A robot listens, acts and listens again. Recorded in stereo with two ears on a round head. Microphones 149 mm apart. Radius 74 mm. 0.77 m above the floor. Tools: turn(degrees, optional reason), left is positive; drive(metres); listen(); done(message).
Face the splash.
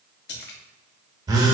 turn(degrees=65, reason="The splash: about 65° left or 115° left.")
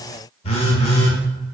listen()
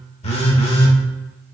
done("I heard a splash, but can't make it out now. It was about straight ahead or 50° left.")